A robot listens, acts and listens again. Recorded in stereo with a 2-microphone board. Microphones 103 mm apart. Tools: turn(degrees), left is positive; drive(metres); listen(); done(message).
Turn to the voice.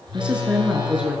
turn(degrees=-30)
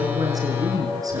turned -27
turn(degrees=-145)
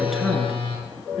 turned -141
done("Facing the woman speaking, over 4 m away.")